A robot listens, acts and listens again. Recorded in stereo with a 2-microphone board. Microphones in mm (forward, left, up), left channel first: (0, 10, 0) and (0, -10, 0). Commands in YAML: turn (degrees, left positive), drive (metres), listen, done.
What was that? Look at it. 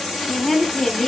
turn: 20
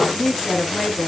turn: 30
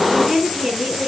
turn: -25
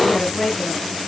done: "Facing the woman speaking."